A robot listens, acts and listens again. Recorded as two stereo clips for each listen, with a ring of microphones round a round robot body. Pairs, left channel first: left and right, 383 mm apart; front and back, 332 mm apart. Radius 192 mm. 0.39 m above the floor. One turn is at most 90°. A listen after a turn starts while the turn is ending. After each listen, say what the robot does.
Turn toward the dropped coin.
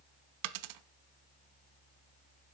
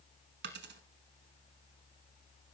Turn 90° right.
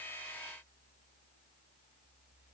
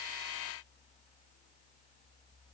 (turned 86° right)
Turn 30° right.
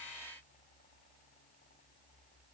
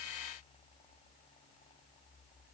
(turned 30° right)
I heard a dropped coin from this way, but can't make it out now.